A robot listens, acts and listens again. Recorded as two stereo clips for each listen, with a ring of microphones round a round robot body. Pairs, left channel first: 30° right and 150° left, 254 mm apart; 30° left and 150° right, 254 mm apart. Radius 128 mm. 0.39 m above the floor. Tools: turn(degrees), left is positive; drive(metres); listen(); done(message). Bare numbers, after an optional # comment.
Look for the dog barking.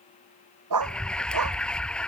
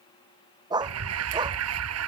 # The dog barking: 135° left.
turn(135)
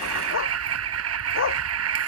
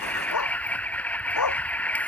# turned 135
# The dog barking is now 15° left.
turn(15)
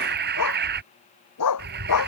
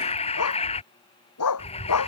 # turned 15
done("Found it: a dog barking, straight ahead.")